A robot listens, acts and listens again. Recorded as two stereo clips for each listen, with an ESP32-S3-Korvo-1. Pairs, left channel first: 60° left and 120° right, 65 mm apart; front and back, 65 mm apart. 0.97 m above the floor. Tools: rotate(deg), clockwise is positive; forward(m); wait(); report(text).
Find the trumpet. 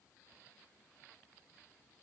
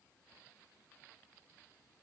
wait()
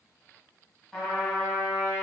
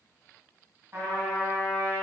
rotate(-145)
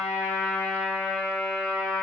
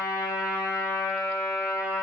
report("Facing the trumpet, 1 to 2 m away.")